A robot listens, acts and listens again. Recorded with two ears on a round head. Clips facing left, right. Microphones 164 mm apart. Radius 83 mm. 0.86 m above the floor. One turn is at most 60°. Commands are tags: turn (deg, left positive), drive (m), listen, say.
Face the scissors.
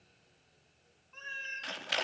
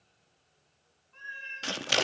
<turn deg="-50"/>
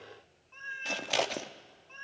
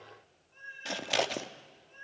<say>Found it: scissors, straight ahead, under 1 m away.</say>